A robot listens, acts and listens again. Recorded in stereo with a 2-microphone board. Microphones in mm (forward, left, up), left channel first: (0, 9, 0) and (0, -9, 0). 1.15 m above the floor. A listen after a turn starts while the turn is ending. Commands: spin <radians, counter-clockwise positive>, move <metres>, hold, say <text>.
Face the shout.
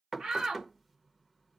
spin -1.31
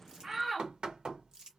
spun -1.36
spin -0.35
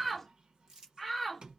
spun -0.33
say Found it: a shout, straight ahead, 1 to 2 m away.